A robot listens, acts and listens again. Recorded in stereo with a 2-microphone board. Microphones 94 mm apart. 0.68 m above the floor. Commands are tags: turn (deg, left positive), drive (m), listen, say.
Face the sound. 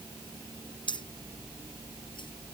<turn deg="60"/>
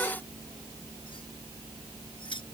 <turn deg="60"/>
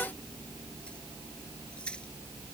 <listen/>
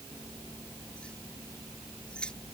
<turn deg="10"/>
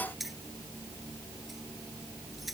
<say>Facing the keys jangling.</say>